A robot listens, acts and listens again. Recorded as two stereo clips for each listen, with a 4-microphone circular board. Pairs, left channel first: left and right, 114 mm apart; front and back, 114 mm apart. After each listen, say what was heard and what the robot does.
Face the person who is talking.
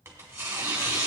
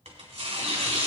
Keep listening.
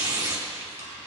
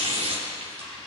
Keep listening.
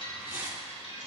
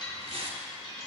I can't make out anyone speaking to turn to.